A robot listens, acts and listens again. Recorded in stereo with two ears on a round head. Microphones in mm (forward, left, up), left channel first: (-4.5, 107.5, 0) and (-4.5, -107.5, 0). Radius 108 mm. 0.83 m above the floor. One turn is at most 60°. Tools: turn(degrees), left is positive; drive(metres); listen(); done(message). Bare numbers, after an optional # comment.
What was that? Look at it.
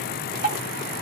# The dripping: about 35° right or 145° right.
turn(-35)
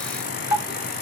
done("Found it: dripping, straight ahead.")